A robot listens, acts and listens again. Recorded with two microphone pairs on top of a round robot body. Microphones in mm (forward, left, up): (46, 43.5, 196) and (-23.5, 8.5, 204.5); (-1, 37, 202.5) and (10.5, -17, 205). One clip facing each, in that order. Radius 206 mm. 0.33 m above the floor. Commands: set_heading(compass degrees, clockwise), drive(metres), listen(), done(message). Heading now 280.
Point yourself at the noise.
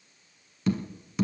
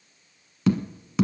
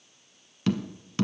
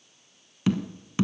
set_heading(75)
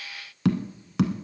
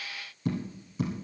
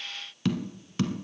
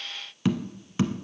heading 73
done("Found it: tapping, straight ahead.")